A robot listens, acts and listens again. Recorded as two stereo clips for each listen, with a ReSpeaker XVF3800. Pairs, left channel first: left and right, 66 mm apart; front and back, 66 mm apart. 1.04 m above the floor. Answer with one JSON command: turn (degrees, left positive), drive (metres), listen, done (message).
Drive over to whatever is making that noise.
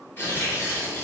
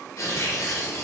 {"turn": 40}
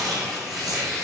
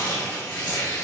{"drive": 1.0}
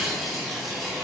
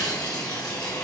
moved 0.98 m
{"drive": 1.0}
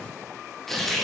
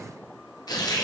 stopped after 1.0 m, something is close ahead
{"done": "I am next to the tearing paper."}